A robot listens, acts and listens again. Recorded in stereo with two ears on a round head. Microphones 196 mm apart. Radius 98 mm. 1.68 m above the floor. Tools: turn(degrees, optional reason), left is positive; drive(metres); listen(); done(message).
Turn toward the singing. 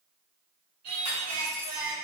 turn(degrees=-65, reason="The singing: about 65° right or 115° right.")
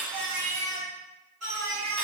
turn(degrees=-70, reason="So it is at 70° right.")
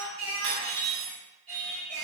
turn(degrees=-30, reason="The singing is now 30° right.")
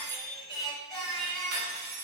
done("Found it: singing, straight ahead.")